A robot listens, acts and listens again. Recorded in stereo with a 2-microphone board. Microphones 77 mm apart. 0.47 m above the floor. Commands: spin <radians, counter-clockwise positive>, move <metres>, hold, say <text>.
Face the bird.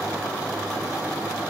hold
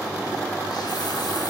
hold
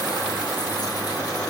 say I can't make out a bird to turn to.